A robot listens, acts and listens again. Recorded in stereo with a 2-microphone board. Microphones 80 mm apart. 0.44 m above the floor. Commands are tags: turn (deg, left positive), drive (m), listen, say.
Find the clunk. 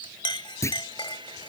<turn deg="35"/>
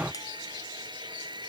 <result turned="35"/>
<listen/>
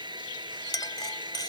<say>I heard a clunk, but can't make it out now. It was about straight ahead or 110° left.</say>